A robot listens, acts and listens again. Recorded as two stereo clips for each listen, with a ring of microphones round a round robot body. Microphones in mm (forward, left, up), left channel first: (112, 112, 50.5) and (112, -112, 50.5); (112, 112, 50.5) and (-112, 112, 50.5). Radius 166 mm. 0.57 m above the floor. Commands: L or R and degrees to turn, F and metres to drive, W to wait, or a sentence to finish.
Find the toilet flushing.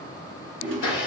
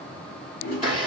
R65
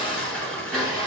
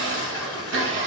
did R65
W
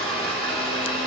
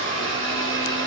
W
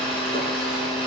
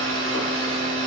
Facing where the toilet flushing came from. I can't hear it now.